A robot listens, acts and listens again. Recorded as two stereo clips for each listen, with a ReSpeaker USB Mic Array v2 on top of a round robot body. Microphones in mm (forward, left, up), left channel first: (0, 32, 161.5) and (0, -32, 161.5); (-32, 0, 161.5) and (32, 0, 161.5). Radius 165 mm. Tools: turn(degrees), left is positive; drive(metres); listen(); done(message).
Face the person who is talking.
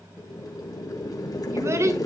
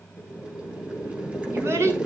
turn(degrees=-45)
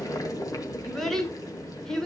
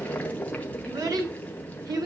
turn(degrees=10)
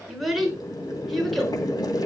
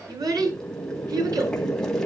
done("Found it: a child speaking, straight ahead.")